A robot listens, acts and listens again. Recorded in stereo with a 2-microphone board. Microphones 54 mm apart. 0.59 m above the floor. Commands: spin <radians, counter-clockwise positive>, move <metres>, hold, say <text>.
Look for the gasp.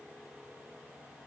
hold
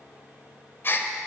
spin 0.79
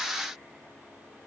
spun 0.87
hold
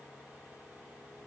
say I heard a gasp, but can't make it out now. It was about 5° right or 85° left.